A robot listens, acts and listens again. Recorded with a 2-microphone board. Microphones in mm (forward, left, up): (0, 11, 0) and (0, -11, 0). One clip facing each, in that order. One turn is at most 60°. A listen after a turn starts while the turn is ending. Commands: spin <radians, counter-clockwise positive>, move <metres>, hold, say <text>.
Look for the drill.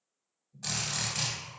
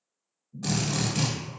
spin -0.52
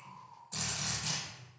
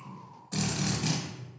spin -1.05
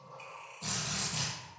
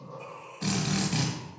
spin -1.05
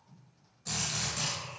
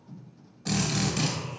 spin -0.70
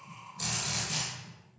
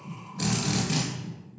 spin -0.44
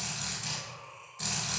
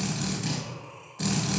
spin -0.17
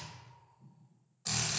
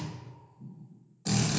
say Found it: a drill, straight ahead.